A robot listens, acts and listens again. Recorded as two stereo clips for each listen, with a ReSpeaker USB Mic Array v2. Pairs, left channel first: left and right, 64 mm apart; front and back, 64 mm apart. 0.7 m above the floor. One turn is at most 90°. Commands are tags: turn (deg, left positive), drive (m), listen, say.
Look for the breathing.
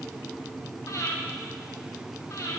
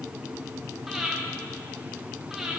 <turn deg="90"/>
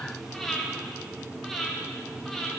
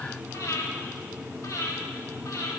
<say>Found it: breathing, straight ahead, 1 to 2 m away.</say>